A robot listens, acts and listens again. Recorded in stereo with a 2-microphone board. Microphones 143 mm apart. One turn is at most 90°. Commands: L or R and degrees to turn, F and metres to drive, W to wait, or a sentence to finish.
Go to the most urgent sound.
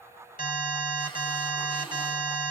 L90
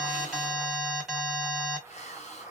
F1.0
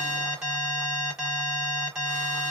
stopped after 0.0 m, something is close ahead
Blocked. The alarm is further on, straight ahead.